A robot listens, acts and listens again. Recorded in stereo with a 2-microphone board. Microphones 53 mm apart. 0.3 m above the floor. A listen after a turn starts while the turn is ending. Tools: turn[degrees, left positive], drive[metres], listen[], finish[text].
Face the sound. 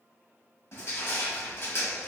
Thought: The crushing: about 55° left or 125° left.
Action: turn[55]
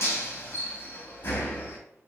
Thought: So it is at 50° left.
Action: turn[50]
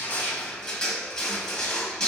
Thought: The crushing is now 15° left.
Action: turn[15]
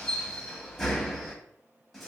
Action: finish[Facing the crushing, under 1 m away.]